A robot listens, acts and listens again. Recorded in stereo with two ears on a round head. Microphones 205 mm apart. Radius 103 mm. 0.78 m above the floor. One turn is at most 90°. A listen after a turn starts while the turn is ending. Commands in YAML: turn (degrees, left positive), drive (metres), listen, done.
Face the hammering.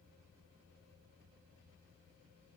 listen: true
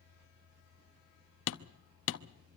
turn: 60
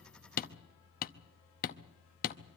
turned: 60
turn: 45
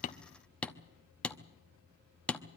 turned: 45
done: "Found it: hammering, straight ahead, under 1 m away."